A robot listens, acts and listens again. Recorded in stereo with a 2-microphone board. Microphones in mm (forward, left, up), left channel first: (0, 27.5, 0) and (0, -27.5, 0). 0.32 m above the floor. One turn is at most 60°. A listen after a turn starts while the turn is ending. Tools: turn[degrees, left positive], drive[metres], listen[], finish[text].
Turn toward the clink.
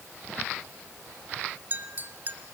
Thought: The clink: about 35° right or 145° right.
Action: turn[-35]
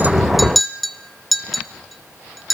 Action: finish[Facing the clink.]